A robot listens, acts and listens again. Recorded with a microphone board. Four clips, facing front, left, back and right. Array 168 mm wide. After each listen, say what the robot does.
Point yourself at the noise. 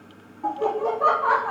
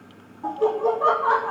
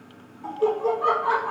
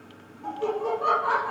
Turn 30° left.
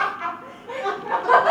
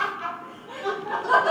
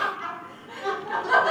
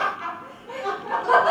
Turn 25° right.
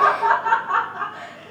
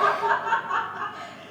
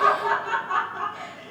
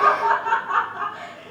Turn 40° right.
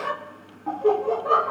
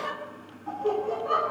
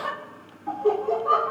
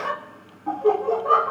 Turn 40° right.
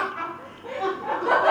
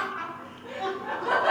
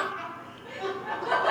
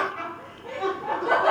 Found it: laughter, straight ahead.